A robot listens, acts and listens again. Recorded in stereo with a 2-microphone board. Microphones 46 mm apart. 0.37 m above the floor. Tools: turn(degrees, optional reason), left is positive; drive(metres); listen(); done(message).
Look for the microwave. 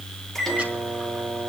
turn(degrees=30)
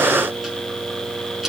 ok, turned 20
listen()
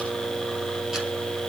turn(degrees=150, reason="So it is at 150° left.")
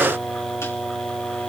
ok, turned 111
turn(degrees=35, reason="The microwave is now 35° left.")
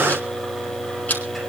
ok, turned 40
done("Found it: a microwave, straight ahead.")